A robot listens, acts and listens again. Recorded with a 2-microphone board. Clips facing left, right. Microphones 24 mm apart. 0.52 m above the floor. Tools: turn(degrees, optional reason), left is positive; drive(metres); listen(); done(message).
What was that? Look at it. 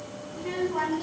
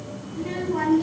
turn(degrees=30)
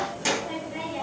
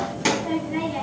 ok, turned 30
turn(degrees=-30, reason="So it is at 30° right.")
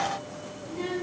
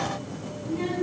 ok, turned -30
done("Facing the child speaking, 2 to 4 m away.")